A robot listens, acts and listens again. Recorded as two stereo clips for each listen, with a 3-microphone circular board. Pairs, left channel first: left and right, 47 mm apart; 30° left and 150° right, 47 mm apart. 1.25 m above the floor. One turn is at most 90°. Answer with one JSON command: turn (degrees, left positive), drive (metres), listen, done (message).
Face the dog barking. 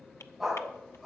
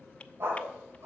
{"turn": 90}
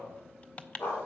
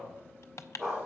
{"turn": 90}
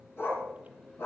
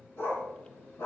{"turn": 65}
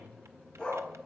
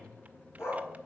{"turn": 10}
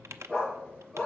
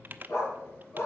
{"done": "Found it: a dog barking, straight ahead, over 4 m away."}